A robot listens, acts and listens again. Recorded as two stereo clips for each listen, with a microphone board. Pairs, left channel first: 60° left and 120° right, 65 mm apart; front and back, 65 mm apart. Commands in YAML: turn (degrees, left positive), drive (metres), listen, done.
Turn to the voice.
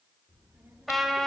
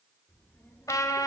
turn: -55
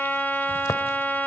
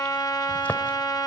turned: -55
listen: true
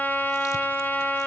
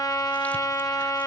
listen: true
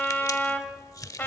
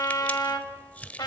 done: "Facing where the child speaking came from. I can't hear it now."